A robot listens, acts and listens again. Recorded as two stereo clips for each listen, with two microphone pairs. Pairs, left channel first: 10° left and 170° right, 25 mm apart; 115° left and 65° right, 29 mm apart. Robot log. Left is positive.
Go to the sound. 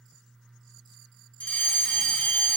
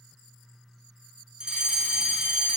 cmd fwd 1.0
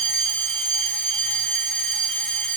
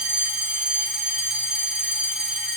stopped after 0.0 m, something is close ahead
end: Something is in my way. I am facing the fire alarm but have not reached it.